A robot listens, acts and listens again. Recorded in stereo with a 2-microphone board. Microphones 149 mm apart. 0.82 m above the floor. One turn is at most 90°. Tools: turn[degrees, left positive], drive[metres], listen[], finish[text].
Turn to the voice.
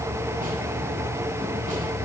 Action: listen[]
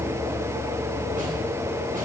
Action: listen[]
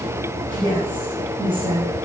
Thought: The woman speaking: about 35° right or 145° right.
Action: turn[-35]
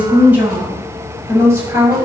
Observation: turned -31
Thought: So it is at 15° right.
Action: turn[-15]
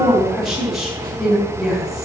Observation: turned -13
Action: finish[Facing the woman speaking, over 4 m away.]